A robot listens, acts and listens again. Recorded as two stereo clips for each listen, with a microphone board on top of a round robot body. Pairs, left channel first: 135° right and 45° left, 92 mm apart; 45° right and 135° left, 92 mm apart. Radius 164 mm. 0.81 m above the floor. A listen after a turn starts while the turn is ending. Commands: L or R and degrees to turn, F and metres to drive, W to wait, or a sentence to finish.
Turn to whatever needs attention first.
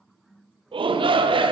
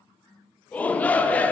L30
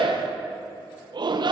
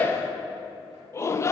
L15
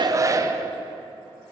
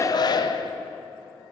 Found it: a shout, straight ahead.